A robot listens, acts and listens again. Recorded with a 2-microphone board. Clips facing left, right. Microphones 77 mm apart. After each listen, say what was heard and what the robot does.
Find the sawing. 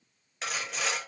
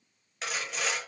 Turn 30° left.
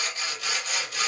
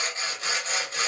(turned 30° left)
So it is at 35° right. Turn 35° right.
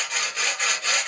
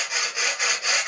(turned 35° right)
The sawing is now 15° right. Turn 15° right.
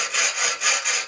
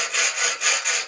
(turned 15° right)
Facing the sawing, under 1 m away.